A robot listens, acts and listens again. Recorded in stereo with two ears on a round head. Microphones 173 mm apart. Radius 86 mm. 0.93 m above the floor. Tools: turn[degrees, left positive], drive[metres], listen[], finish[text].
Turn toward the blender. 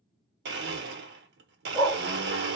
Thought: The blender: about 60° right or 120° right.
Action: turn[-60]
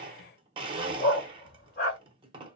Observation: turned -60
Thought: So it is at 30° right.
Action: turn[-30]
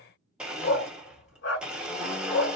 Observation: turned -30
Action: finish[Facing the blender, under 1 m away.]